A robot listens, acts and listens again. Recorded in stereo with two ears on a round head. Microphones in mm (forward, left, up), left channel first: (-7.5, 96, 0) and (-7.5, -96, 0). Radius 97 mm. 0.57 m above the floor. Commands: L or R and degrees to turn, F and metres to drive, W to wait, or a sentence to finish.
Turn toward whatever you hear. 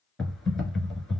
L30
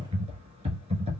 R30
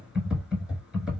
Found it: typing on a keyboard, straight ahead.